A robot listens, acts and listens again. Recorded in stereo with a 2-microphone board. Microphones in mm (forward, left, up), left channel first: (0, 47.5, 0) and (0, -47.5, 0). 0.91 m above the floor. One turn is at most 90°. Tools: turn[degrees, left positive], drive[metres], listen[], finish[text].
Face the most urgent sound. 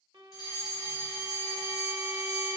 Thought: The fire alarm: about 45° left or 135° left.
Action: turn[45]
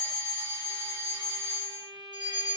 Thought: So it is at 80° left.
Action: turn[80]
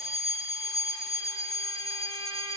Action: finish[Found it: a fire alarm, straight ahead, 2 to 4 m away.]